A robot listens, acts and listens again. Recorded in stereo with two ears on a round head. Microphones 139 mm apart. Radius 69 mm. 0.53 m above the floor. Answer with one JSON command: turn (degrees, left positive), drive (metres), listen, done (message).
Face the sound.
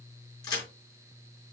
{"turn": 30}
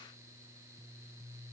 {"listen": true}
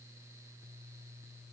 {"done": "I heard a crack, but can't make it out now. It was about straight ahead or 120° left."}